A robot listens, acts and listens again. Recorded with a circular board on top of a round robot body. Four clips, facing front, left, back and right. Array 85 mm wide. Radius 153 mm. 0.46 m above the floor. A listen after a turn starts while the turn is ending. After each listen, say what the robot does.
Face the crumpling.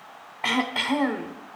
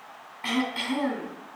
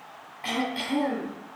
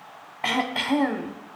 Keep listening.
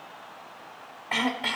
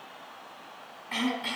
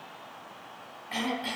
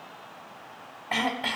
Keep listening.
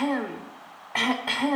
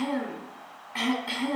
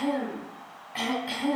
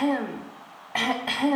I can't make out crumpling to turn to.